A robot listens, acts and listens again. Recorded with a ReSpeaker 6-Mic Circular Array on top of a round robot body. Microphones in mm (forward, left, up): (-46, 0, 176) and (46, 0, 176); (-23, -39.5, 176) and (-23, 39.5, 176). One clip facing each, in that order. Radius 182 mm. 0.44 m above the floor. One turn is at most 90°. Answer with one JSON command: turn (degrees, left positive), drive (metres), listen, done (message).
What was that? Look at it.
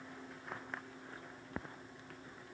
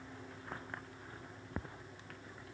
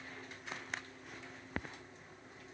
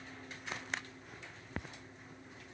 {"listen": true}
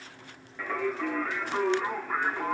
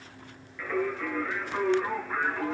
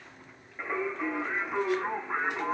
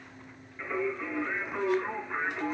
{"turn": -90}
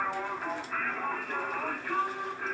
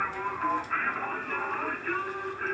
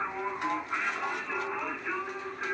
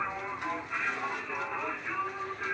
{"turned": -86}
{"turn": -25}
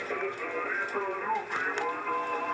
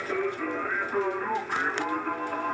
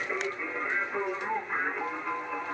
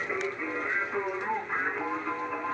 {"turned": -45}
{"turn": 20}
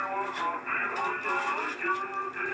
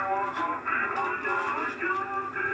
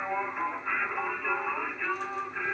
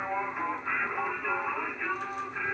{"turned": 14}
{"done": "Facing the singing, over 4 m away."}